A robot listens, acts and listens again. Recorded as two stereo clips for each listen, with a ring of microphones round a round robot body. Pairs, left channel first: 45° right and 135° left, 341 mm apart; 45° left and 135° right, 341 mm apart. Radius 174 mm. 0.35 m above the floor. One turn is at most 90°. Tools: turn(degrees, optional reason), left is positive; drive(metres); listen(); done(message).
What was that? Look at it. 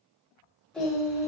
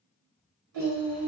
turn(degrees=-90, reason="The singing: 145° right.")
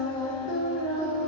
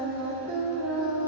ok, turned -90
turn(degrees=-90, reason="The singing is now 95° right.")
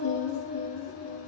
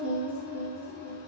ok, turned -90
turn(degrees=-55, reason="The singing is now 55° right.")
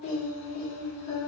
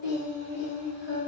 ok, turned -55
turn(degrees=-15, reason="The singing is now 15° right.")
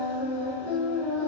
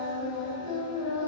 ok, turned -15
done("Facing the singing, 2 to 4 m away.")